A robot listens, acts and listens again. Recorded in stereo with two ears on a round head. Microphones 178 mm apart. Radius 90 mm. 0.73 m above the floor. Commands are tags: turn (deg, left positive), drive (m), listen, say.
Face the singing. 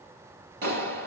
<listen/>
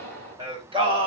<turn deg="-30"/>
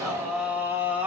<turn deg="-10"/>
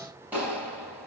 <listen/>
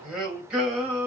<say>Facing the singing.</say>